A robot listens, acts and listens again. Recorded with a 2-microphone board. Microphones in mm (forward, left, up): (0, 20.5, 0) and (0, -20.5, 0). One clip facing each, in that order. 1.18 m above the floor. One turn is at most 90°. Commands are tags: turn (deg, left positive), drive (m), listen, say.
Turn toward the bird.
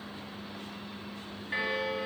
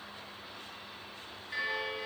<listen/>
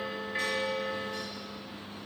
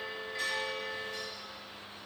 <listen/>
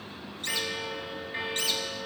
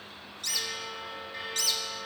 <turn deg="35"/>
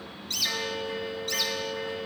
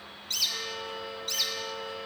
<say>Found it: a bird, straight ahead.</say>